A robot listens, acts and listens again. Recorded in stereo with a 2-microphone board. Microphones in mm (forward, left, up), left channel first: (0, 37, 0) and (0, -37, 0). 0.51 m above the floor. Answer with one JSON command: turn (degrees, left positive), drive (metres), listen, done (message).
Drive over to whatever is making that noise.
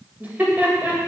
{"turn": -25}
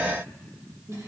{"turn": -125}
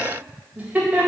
{"turn": -20}
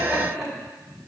{"drive": 1.0}
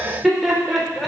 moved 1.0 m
{"drive": 1.0}
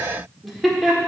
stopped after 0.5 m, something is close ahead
{"done": "I am next to the laughter."}